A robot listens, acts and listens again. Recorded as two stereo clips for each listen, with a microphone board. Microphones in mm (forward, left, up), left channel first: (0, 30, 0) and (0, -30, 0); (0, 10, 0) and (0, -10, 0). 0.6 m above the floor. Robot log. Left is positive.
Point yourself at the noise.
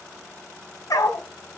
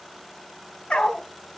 note: The dog barking: about 70° left or 110° left.
cmd yaw +70
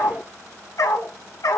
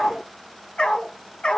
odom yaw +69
note: So it is at 80° left.
cmd yaw +80
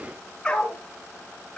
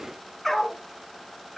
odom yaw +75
note: The dog barking is now 20° left.
cmd yaw +20
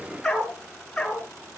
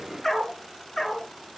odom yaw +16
note: The dog barking is now 10° left.
cmd yaw +10
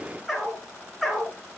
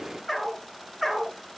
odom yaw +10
end: Facing the dog barking.